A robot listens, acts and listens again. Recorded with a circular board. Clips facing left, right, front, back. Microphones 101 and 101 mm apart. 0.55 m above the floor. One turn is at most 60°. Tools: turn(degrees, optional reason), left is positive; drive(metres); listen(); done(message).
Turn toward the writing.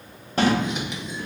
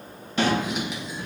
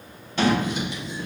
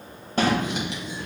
turn(degrees=-60, reason="The writing: 175° right.")
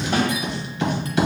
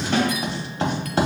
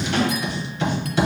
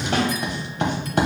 turn(degrees=-60, reason="The writing is now 140° right.")
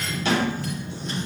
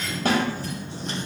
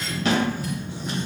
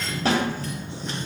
turn(degrees=-60, reason="The writing is now 80° right.")
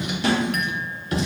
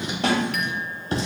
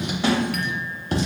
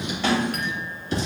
turn(degrees=-30, reason="The writing is now 30° right.")
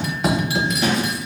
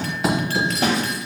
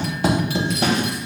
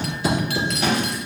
done("Facing the writing.")